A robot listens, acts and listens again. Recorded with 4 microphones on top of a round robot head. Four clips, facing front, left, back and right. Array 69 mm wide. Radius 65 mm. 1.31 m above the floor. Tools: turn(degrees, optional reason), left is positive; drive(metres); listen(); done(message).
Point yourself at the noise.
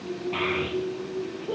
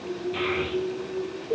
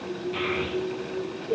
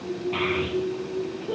turn(degrees=-45, reason="The child speaking: 45° right.")
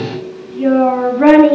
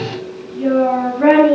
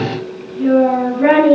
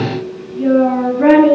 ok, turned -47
done("Found it: a child speaking, straight ahead.")